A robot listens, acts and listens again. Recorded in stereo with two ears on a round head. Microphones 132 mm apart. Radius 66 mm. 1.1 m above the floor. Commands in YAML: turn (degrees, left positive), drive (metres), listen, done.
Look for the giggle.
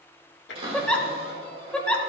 turn: 30
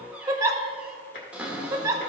turn: -25
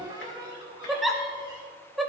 done: "Facing the giggle, under 1 m away."